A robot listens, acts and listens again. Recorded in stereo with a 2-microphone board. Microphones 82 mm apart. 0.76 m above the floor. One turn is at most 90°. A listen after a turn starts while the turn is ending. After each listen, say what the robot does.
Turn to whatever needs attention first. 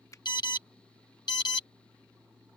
Turn 60° left.
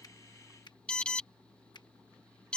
Turn 15° left.
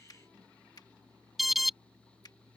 Facing the alarm.